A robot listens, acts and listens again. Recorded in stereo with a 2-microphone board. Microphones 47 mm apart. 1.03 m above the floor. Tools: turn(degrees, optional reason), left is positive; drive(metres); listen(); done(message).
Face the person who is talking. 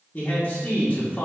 turn(degrees=25, reason="The man speaking: about 25° left or 155° left.")
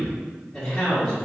done("Facing the man speaking.")